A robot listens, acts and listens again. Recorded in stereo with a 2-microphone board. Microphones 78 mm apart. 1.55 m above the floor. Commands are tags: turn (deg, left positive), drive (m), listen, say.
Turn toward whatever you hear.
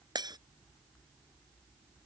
<turn deg="-60"/>
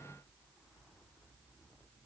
<listen/>
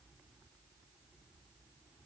<say>I heard breaking glass, but can't make it out now. It was about straight ahead or 60° right.</say>